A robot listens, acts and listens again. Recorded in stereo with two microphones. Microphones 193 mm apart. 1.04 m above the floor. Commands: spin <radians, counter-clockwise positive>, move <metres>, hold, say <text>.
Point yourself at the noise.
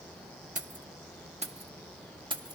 spin -0.44
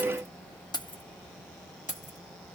spin 0.70
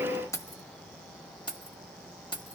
spin 0.44
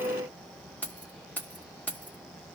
spin 0.17
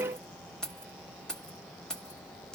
say Facing the keys jangling, 1 to 2 m away.